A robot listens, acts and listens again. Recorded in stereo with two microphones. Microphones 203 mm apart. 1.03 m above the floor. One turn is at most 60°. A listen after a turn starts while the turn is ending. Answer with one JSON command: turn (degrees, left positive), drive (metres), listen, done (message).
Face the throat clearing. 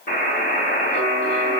{"listen": true}
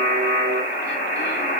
{"listen": true}
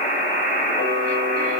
{"done": "I can't make out throat clearing to turn to."}